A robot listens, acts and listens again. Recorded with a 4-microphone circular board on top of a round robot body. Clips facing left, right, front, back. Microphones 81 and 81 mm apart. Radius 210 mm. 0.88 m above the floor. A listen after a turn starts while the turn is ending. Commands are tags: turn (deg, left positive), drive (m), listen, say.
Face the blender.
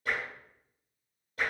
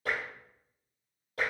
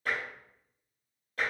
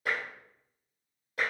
<listen/>
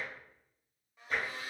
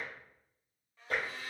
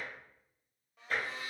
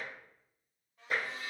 <turn deg="15"/>
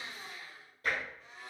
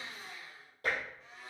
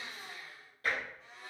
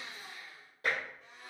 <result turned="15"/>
<say>Facing the blender, 1 to 2 m away.</say>